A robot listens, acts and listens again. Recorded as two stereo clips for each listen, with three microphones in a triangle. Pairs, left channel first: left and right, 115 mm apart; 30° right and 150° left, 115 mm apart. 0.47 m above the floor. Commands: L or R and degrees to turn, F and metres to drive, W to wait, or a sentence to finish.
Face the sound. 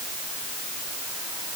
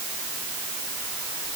W
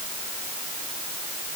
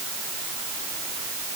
W
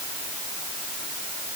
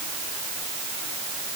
I can't make out anything to turn to.